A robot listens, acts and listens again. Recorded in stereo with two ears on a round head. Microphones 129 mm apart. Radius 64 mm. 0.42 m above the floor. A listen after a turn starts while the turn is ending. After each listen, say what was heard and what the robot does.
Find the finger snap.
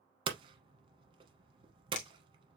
The finger snap: about 50° left or 130° left. Turn 50° left.
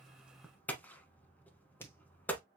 So it is at 20° left. Turn 20° left.
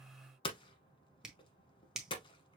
Found it: a finger snap, straight ahead, 1 to 2 m away.